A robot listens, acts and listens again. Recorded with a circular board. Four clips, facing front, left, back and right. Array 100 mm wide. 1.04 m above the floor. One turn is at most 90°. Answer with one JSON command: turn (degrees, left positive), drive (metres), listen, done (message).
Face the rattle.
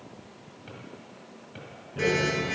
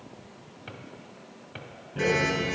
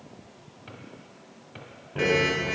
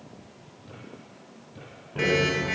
{"turn": -90}
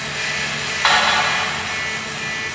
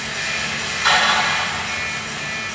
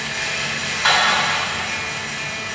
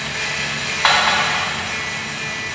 {"turn": -60}
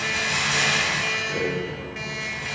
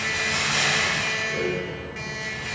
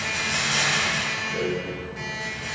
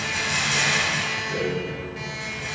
{"turn": -10}
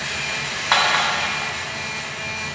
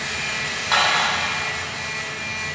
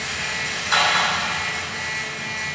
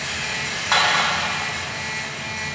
{"done": "Found it: a rattle, straight ahead."}